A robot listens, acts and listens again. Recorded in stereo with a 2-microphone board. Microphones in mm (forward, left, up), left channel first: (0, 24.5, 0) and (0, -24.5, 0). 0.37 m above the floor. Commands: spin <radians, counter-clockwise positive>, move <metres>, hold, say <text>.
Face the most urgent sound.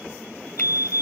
spin -1.05
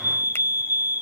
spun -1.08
spin -0.96
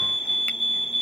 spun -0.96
say Found it: a fire alarm, straight ahead.